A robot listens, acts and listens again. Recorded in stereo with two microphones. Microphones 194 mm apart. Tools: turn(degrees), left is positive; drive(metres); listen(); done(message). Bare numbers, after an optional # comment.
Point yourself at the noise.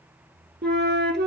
# The flute: about 70° right or 110° right.
turn(-70)
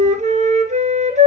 # So it is at 40° right.
turn(-40)
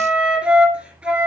done("Facing the flute.")